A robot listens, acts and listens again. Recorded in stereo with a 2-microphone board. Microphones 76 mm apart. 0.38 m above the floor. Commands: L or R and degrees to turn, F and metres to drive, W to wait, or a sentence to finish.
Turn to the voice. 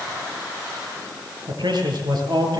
R70
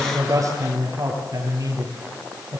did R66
R50
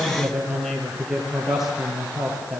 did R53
Facing the man speaking, over 4 m away.